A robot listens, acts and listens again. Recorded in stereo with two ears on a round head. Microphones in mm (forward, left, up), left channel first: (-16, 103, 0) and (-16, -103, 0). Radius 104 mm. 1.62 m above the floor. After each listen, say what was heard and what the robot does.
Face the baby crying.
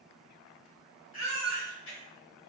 The baby crying: about 60° left or 120° left. Turn 60° left.
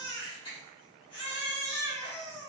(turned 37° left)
So it is at 25° left. Turn 25° left.
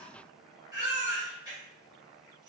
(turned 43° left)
The baby crying is now 15° right. Turn 15° right.
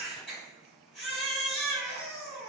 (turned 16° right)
Found it: a baby crying, straight ahead.